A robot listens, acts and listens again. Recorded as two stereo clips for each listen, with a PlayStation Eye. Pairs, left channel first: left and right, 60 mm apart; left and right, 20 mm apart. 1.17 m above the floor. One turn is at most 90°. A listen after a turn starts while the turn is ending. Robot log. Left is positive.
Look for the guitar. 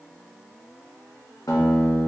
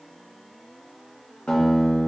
cmd yaw +90
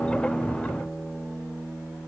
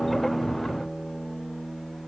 end: Found it: a guitar, straight ahead.